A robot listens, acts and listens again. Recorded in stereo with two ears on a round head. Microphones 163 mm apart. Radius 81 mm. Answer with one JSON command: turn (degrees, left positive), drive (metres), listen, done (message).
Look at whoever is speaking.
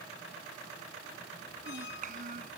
{"turn": -50}
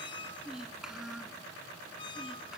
{"done": "Found it: a child speaking, straight ahead."}